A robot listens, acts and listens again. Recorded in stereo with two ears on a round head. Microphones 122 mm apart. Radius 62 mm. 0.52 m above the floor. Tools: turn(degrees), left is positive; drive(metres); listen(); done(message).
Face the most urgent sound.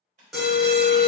turn(degrees=30)
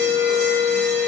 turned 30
turn(degrees=155)
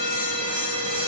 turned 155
turn(degrees=-35)
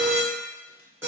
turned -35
turn(degrees=-20)
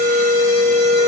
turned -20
done("Facing the alarm.")